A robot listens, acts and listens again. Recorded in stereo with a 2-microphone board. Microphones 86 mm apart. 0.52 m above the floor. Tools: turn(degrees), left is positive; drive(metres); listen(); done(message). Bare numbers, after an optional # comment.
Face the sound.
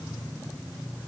listen()
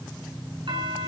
# The doorbell: about 65° right or 115° right.
turn(-65)
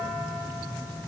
listen()
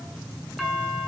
done("Found it: a doorbell, straight ahead.")